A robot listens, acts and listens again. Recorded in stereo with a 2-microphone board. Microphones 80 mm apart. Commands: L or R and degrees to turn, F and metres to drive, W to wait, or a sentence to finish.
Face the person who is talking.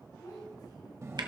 L55
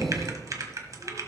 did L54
W
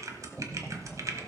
W
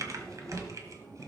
I heard a child speaking, but can't make it out now. It was about straight ahead or 70° left.